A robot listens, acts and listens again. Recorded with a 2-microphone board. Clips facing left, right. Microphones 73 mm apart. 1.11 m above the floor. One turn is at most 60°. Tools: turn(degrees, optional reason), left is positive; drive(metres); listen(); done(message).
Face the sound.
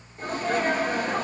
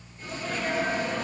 turn(degrees=55, reason="The sneeze: about 55° left or 125° left.")
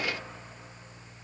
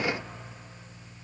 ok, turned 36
listen()
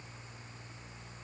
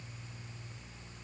done("I heard a sneeze, but can't make it out now. It was about 20° left or 90° left.")